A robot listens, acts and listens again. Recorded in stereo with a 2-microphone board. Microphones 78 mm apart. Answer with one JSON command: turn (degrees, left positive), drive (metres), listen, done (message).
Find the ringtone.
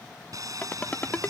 {"turn": 20}
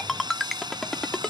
{"done": "Found it: a ringtone, straight ahead."}